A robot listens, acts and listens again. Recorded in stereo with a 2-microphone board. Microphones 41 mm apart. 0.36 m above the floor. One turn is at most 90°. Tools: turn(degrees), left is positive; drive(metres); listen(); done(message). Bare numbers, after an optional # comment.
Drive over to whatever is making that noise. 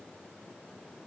listen()
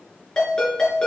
# The ringtone: about 20° left or 160° left.
turn(20)
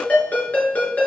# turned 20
# So it is at 140° left.
turn(90)
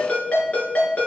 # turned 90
# The ringtone is now 35° left.
turn(35)
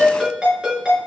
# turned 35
# The ringtone is now 25° right.
turn(-25)
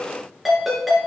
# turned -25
drive(1.0)
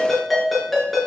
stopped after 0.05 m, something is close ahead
done("Blocked. The ringtone is further on, straight ahead.")